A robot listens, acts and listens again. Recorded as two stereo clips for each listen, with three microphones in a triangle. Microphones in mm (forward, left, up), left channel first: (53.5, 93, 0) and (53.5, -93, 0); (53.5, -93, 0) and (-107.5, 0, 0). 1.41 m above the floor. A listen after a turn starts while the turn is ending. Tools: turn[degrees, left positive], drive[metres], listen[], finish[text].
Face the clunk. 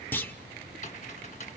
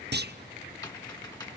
Thought: The clunk: 170° left.
Action: turn[170]
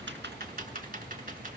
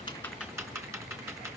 Action: finish[Facing where the clunk came from. I can't hear it now.]